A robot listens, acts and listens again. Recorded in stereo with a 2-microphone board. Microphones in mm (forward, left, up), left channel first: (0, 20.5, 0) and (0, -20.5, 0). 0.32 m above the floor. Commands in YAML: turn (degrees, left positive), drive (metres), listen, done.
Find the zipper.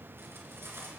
listen: true
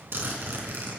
turn: -60
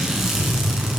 turn: -10
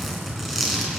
done: "Found it: a zipper, straight ahead, 2 to 4 m away."